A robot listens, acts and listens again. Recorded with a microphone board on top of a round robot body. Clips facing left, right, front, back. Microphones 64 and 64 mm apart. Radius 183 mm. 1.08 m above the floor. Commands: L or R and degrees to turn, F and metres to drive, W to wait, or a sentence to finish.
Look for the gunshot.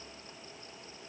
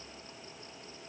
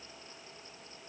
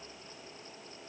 W
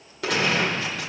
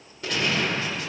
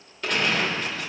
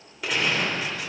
L95
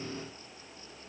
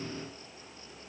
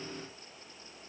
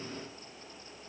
Facing where the gunshot came from. I can't hear it now.